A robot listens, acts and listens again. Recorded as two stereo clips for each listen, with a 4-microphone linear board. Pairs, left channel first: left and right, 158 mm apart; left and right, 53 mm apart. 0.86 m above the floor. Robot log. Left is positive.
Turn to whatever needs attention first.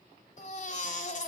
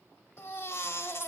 note: The baby crying: about 55° left or 125° left.
cmd yaw +55
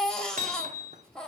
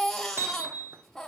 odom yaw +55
end: Facing the baby crying.